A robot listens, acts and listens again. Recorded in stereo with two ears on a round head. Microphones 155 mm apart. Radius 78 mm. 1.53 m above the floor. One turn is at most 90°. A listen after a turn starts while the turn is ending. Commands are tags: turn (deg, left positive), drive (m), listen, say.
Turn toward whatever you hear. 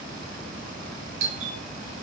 <turn deg="-90"/>
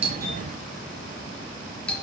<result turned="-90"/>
<say>Found it: a doorbell, straight ahead, 2 to 4 m away.</say>